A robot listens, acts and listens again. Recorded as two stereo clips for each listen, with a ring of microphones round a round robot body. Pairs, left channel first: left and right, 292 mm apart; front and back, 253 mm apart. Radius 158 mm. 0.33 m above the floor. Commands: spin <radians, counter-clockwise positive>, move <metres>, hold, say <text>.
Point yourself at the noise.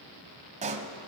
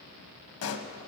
spin -0.44
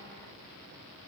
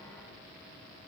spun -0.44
say Facing where the pop came from. I can't hear it now.